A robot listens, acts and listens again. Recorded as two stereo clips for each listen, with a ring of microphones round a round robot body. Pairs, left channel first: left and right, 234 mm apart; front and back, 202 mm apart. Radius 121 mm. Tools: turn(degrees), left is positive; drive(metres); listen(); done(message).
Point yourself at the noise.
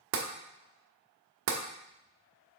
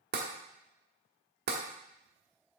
turn(degrees=-130)
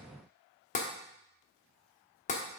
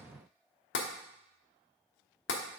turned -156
turn(degrees=30)
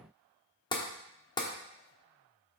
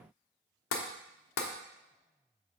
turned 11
turn(degrees=15)
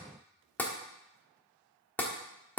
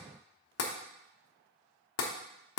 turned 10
done("Found it: tapping, straight ahead, 1 to 2 m away.")